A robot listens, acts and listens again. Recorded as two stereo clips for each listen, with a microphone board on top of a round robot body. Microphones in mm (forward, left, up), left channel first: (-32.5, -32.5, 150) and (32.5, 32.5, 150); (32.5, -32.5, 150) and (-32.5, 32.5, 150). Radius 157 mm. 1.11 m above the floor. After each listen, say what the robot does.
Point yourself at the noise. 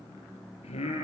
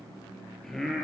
Turn 130° right.
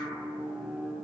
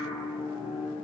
Turn 40° right.
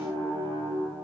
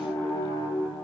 Found it: singing, straight ahead.